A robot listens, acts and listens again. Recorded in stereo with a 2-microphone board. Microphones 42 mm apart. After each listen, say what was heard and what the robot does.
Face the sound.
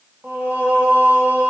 The singing: about 65° right or 115° right. Turn 65° right.
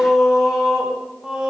So it is at 20° right. Turn 20° right.
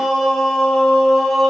Facing the singing, over 4 m away.